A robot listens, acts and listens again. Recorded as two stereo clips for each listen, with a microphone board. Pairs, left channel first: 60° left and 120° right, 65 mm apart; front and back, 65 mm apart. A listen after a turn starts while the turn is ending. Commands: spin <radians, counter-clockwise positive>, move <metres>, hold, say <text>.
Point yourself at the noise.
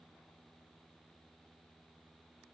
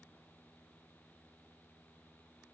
hold
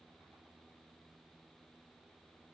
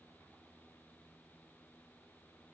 hold
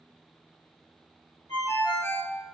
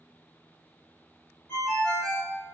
spin 1.31
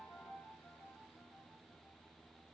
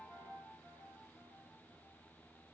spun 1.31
hold
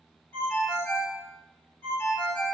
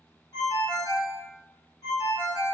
spin 0.17
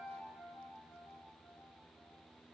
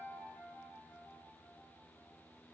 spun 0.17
hold
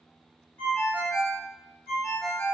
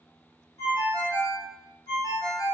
say Facing the ringtone.